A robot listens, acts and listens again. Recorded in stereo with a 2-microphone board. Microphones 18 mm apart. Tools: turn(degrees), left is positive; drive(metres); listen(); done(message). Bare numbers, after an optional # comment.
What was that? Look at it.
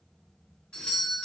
# The doorbell: about 75° left or 105° left.
turn(75)
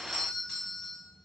# So it is at 25° left.
turn(25)
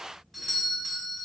done("Facing the doorbell.")